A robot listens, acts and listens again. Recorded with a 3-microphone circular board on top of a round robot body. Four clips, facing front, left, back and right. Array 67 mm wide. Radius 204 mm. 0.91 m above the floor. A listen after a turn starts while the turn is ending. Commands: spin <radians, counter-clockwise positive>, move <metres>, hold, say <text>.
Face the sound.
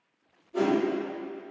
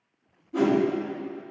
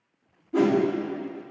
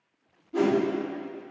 spin -3.05
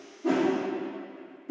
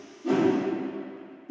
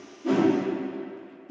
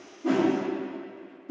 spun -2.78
spin -0.35
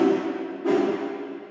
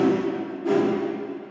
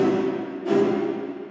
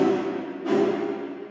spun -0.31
say Found it: a whoosh, straight ahead, 1 to 2 m away.